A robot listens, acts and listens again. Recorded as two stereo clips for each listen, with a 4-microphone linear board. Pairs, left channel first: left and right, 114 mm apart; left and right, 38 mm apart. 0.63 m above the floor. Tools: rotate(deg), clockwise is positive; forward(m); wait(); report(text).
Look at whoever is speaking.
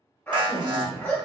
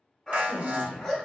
rotate(45)
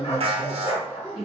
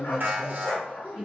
report("Facing the woman speaking, 1 to 2 m away.")